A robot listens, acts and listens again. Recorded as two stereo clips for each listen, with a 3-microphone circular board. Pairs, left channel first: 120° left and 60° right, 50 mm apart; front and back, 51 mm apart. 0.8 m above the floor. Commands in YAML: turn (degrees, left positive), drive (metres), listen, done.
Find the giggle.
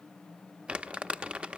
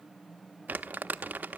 listen: true
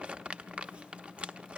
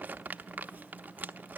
listen: true
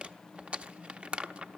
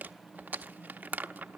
done: "I can't make out a giggle, only crumpling."